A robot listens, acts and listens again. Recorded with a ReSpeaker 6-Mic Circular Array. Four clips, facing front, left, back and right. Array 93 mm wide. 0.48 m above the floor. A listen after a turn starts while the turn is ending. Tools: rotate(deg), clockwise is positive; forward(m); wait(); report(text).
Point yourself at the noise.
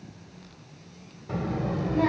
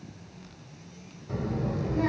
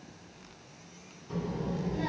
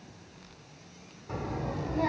report("Facing the child speaking, 1 to 2 m away.")